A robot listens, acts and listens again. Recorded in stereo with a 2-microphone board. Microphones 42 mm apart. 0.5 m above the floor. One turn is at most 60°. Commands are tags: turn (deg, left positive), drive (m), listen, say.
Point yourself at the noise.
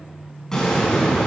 <turn deg="15"/>
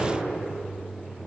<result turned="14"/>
<listen/>
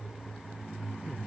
<say>I heard an explosion, but can't make it out now. It was about straight ahead or 150° left.</say>